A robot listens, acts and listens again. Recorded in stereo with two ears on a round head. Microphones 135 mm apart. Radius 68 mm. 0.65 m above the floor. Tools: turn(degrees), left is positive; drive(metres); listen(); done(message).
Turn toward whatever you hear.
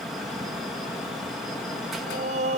turn(degrees=-50)
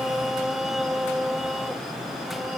done("Facing the singing.")